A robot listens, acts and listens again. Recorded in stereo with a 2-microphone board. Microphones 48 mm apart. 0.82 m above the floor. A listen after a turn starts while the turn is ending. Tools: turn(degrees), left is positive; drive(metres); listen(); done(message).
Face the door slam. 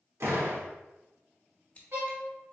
turn(degrees=-65)
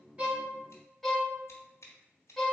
listen()
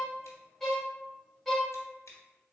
done("I heard a door slam, but can't make it out now. It was about straight ahead or 50° right.")